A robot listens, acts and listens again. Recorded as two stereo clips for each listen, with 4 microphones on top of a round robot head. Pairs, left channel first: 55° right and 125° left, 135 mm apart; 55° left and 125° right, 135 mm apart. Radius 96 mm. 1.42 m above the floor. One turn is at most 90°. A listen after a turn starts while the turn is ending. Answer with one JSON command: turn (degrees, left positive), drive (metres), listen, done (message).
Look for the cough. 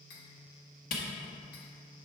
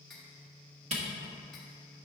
{"listen": true}
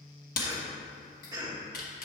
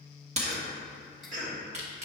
{"turn": -90}
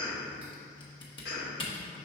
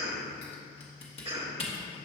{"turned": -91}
{"turn": -75}
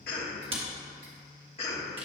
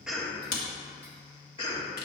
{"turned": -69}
{"done": "Found it: a cough, straight ahead."}